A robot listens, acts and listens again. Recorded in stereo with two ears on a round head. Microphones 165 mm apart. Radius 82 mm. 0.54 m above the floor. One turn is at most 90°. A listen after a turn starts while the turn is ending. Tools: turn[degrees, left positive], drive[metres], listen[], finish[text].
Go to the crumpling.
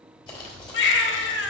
Thought: The crumpling: about 25° left or 155° left.
Action: turn[25]
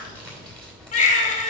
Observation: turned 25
Action: drive[1.0]
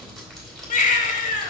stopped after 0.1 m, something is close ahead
Action: finish[Something is in my way. I am facing the crumpling but have not reached it.]